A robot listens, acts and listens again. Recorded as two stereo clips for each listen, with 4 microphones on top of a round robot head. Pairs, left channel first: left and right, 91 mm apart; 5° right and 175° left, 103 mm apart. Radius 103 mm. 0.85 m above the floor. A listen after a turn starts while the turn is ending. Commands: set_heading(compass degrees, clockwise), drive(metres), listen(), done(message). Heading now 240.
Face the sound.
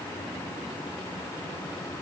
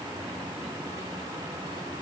listen()
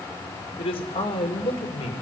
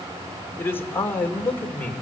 set_heading(170)
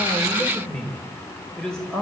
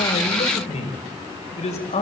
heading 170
done("Facing the man speaking.")